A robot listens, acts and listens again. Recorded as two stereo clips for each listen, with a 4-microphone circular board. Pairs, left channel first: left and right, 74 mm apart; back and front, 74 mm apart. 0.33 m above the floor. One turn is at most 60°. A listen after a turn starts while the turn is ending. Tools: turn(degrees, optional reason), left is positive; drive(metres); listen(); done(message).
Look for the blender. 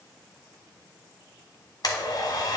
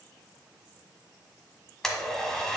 turn(degrees=60, reason="The blender: 100° left.")
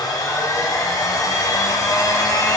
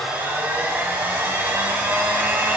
turn(degrees=60, reason="The blender is now 60° left.")
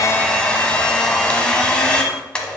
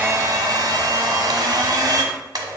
turn(degrees=15, reason="The blender is now 15° left.")
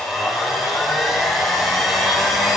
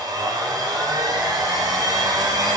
done("Found it: a blender, straight ahead.")